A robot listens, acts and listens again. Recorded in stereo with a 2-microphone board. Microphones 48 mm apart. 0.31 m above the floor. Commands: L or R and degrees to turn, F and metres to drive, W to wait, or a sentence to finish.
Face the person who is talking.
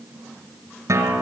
W
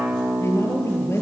L60
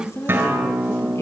L60
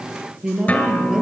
R15
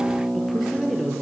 Facing the woman speaking.